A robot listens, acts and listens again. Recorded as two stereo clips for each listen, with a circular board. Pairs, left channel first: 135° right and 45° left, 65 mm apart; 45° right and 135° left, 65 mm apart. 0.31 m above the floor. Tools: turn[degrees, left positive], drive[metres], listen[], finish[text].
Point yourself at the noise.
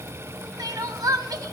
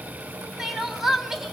Thought: The crying: 50° left.
Action: turn[50]
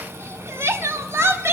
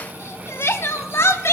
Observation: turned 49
Action: finish[Facing the crying, under 1 m away.]